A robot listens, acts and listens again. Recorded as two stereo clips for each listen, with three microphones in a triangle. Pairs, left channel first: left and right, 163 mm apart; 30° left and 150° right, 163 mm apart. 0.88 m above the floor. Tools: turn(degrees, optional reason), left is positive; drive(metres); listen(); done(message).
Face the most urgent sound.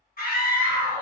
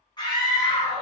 turn(degrees=90, reason="The scream: 90° left.")
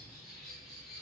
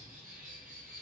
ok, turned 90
listen()
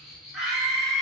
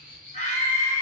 done("Found it: a scream, straight ahead.")